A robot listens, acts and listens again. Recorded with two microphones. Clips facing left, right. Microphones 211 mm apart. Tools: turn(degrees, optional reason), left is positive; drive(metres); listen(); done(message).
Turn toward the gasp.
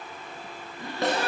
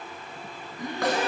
turn(degrees=-20, reason="The gasp: about 20° right or 160° right.")
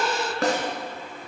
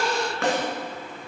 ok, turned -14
done("Found it: a gasp, straight ahead, 1 to 2 m away.")